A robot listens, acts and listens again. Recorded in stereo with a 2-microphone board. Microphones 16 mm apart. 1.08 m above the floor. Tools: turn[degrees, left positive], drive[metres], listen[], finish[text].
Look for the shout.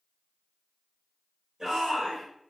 Thought: The shout: about 40° right or 140° right.
Action: turn[-40]
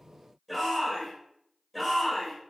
Action: finish[Found it: a shout, straight ahead.]